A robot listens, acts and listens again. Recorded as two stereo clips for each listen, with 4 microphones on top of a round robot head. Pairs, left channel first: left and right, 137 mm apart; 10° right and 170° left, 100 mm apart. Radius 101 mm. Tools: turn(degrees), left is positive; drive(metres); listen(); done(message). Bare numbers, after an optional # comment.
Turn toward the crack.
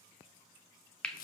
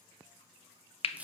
listen()
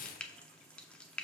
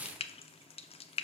listen()
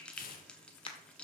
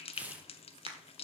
# The crack: 145° left.
turn(145)
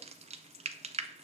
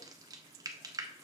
done("I heard a crack from this way, but can't make it out now.")